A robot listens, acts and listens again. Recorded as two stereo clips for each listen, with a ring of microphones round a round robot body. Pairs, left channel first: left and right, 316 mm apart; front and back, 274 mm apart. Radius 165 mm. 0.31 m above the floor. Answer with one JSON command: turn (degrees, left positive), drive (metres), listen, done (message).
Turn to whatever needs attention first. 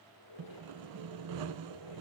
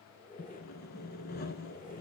{"listen": true}
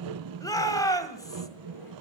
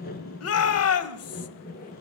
{"turn": 10}
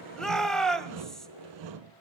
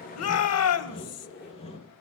{"done": "Found it: a shout, straight ahead, 1 to 2 m away."}